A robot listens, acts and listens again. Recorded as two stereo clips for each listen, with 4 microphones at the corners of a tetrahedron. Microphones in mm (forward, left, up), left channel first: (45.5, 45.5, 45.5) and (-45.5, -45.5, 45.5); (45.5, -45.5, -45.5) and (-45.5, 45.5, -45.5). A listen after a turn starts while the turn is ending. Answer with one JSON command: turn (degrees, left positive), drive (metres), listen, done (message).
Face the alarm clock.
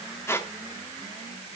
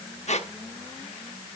{"listen": true}
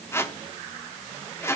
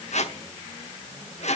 {"listen": true}
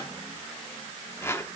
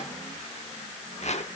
{"done": "I can't make out an alarm clock, only a squeak."}